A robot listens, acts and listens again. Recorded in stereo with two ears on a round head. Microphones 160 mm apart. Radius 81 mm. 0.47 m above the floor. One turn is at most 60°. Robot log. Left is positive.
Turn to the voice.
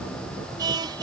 cmd idle
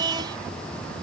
cmd idle
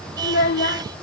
note: The child speaking: about 60° left or 120° left.
cmd yaw +60
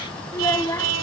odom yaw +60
note: So it is at 20° left.
cmd yaw +20
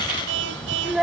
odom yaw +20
end: Found it: a child speaking, straight ahead.